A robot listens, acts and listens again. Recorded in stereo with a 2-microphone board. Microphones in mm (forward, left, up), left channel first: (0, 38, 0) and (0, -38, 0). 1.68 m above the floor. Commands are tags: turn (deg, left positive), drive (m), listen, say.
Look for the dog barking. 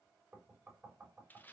<listen/>
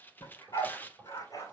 <turn deg="50"/>
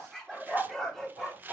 <say>Found it: a dog barking, straight ahead.</say>